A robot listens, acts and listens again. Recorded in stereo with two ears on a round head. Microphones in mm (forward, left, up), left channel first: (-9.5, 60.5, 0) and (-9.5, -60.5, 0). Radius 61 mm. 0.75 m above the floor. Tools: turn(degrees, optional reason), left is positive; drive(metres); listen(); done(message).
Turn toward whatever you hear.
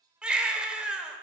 turn(degrees=-30)
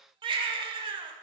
turn(degrees=-140, reason="So it is at 140° right.")
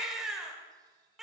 done("Facing the baby crying, under 1 m away.")